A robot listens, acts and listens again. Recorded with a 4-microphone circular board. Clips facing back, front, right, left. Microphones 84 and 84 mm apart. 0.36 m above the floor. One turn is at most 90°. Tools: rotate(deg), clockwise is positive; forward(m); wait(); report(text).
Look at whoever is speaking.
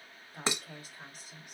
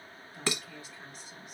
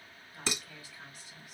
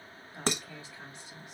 rotate(-90)
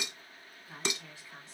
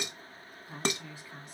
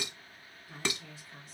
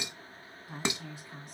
rotate(-75)
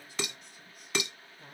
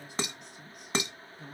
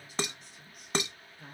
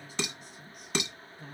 report("Facing the woman speaking, 2 to 4 m away.")